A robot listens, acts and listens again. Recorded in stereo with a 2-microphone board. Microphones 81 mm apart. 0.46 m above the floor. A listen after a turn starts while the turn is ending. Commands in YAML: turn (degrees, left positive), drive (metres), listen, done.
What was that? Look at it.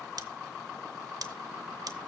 turn: -60
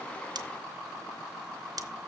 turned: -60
turn: -60
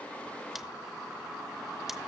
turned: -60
listen: true
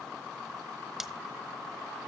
done: "Facing the scissors."